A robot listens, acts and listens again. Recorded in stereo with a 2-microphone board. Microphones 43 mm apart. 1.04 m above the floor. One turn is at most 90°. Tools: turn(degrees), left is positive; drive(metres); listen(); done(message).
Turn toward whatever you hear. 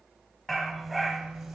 turn(degrees=-30)
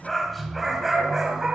turn(degrees=-20)
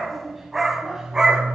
turn(degrees=-20)
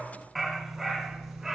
turn(degrees=-30)
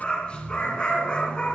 turn(degrees=20)
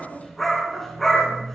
done("Facing the dog barking.")